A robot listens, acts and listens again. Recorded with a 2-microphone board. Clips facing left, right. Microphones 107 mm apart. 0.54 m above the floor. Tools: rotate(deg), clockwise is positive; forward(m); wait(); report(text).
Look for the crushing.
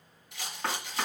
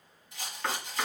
wait()
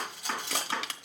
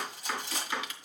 rotate(-90)
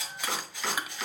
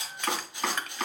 rotate(-10)
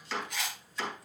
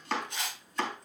wait()
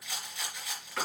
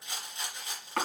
wait()
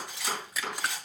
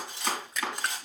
report("Found it: crushing, straight ahead.")